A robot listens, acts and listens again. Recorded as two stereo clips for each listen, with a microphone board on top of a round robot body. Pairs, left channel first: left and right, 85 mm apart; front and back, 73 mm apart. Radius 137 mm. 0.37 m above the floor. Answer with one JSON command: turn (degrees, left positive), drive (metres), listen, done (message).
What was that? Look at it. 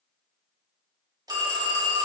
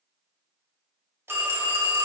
{"turn": -125}
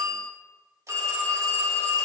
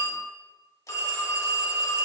{"turn": -40}
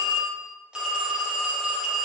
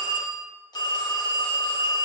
{"turn": -10}
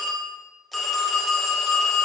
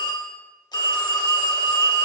{"done": "Found it: a phone ringing, straight ahead."}